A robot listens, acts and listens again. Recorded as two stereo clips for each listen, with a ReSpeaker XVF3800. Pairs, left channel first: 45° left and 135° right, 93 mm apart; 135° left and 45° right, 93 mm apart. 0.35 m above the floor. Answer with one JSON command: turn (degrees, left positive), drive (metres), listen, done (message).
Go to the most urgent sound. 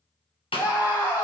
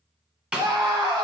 {"turn": -15}
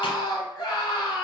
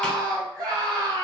{"drive": 1.0}
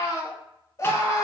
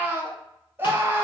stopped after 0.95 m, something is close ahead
{"turn": 10}
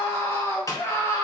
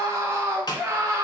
{"done": "Arrived at the scream, straight ahead."}